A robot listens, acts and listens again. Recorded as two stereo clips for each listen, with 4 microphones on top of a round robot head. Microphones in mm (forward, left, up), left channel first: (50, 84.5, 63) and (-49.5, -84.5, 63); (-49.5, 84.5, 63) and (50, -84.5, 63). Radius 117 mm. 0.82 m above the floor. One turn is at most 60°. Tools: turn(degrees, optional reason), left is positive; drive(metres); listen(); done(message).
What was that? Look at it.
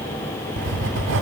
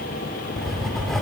turn(degrees=-60, reason="The writing: 150° right.")
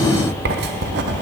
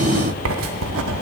turn(degrees=-60, reason="The writing is now 80° right.")
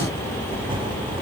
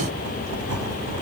turn(degrees=-55, reason="The writing is now 55° right.")
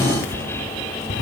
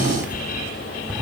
turn(degrees=25, reason="The writing is now 25° left.")
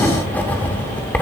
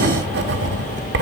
turn(degrees=-25, reason="The writing is now 25° right.")
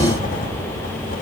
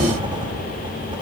turn(degrees=10, reason="The writing is now 10° left.")
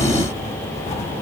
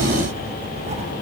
done("Facing the writing, under 1 m away.")